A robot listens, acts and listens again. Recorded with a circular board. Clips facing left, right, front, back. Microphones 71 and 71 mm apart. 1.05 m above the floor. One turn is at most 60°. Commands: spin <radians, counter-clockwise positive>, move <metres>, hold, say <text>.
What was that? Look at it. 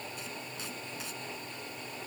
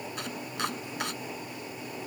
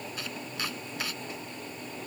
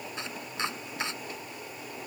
spin -1.05
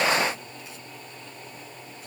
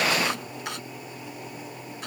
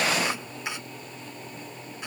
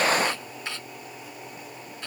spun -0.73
spin -1.05
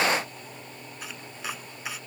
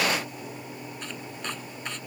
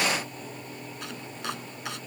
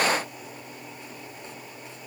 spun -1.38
say Found it: chopping, straight ahead.